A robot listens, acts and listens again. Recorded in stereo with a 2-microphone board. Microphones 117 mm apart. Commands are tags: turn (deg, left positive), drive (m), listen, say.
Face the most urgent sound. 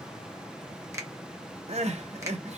<turn deg="-65"/>
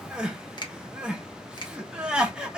<turn deg="-10"/>
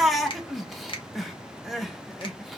<say>Found it: crying, straight ahead, under 1 m away.</say>